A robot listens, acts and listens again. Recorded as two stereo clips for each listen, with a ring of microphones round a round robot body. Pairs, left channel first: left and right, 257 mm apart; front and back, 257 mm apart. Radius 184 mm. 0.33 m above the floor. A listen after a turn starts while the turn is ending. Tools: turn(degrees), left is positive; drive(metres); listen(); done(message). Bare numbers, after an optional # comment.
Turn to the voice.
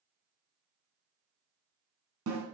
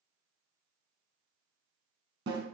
listen()
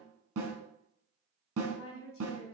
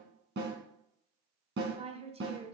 # The woman speaking: 120° left.
turn(120)
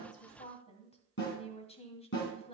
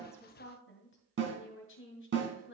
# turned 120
# The woman speaking is now 30° left.
turn(30)
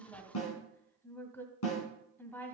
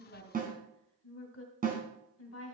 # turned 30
# The woman speaking is now 10° left.
turn(10)
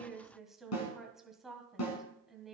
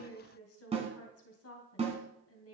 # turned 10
done("Found it: a woman speaking, straight ahead, 2 to 4 m away.")